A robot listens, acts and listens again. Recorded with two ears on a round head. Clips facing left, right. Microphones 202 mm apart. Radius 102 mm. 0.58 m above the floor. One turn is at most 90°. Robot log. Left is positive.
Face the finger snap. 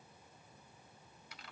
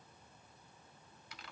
cmd idle
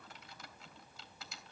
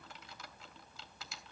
cmd idle
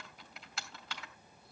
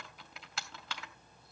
end: I can't make out a finger snap to turn to.